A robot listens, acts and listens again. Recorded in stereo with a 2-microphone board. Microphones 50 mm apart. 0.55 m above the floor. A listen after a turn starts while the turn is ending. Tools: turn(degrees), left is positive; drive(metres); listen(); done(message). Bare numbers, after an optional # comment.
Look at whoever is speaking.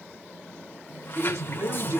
# The man speaking: about 70° right or 110° right.
turn(-70)
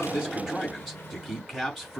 done("Found it: a man speaking, straight ahead, over 4 m away.")